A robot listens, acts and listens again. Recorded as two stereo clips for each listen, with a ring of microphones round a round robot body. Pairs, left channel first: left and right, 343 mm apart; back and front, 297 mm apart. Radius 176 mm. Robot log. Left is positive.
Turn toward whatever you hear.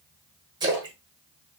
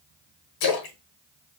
note: The splash: 170° right.
cmd yaw -170
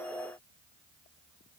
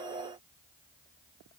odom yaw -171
end: Facing where the splash came from. I can't hear it now.